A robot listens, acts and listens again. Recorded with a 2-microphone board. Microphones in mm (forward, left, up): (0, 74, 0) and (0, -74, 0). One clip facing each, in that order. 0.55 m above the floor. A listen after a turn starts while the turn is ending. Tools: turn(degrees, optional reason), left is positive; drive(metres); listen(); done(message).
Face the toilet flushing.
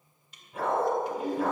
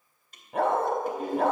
turn(degrees=-50, reason="The toilet flushing: about 50° right or 130° right.")
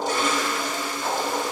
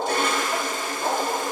turn(degrees=-65, reason="So it is at 65° right.")
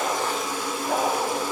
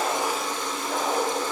turn(degrees=10, reason="The toilet flushing is now 10° left.")
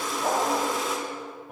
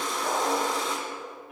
done("Found it: a toilet flushing, straight ahead.")